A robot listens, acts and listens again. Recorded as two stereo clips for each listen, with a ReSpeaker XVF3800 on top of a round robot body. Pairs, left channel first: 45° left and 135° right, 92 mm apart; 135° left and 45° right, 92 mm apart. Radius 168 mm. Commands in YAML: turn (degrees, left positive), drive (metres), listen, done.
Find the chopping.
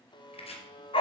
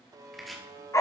turn: 45
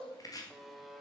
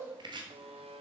done: "Facing the chopping, 2 to 4 m away."